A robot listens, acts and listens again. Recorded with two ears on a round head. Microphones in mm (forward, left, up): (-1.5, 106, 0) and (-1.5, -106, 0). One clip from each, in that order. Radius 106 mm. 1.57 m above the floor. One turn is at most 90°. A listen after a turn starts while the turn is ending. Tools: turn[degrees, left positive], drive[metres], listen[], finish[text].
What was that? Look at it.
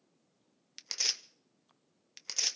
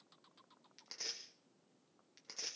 Thought: The tearing paper: about 65° left or 115° left.
Action: turn[65]
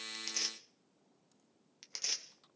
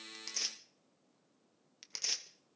Action: finish[Found it: tearing paper, straight ahead.]